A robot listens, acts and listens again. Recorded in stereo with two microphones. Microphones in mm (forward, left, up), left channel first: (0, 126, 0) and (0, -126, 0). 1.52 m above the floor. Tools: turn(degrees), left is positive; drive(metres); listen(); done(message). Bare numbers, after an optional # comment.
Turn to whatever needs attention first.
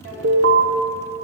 # The alarm: about 65° right or 115° right.
turn(-65)
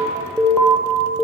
done("Facing the alarm, under 1 m away.")